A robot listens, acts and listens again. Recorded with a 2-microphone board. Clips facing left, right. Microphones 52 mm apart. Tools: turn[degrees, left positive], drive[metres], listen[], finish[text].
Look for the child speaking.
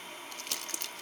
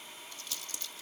Action: listen[]
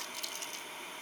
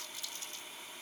Action: listen[]
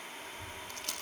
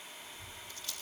Thought: The child speaking: about 60° left or 120° left.
Action: turn[60]
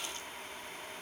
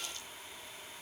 Action: listen[]
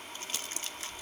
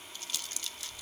Action: finish[Found it: a child speaking, straight ahead.]